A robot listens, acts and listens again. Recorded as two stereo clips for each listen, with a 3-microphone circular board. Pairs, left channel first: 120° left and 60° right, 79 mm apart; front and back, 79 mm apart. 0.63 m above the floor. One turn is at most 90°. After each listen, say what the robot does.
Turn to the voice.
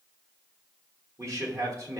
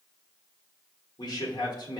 Turn 15° right.
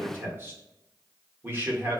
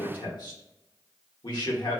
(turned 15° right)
Found it: a man speaking, straight ahead.